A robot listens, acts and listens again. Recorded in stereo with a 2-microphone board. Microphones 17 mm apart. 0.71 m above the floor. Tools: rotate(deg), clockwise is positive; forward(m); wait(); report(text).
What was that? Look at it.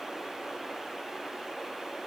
wait()
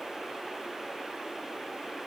wait()
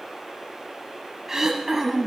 rotate(25)
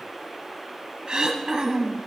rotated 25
rotate(130)
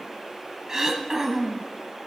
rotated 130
rotate(35)
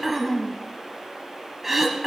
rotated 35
rotate(20)
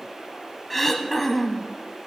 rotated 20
report("Found it: throat clearing, straight ahead, 1 to 2 m away.")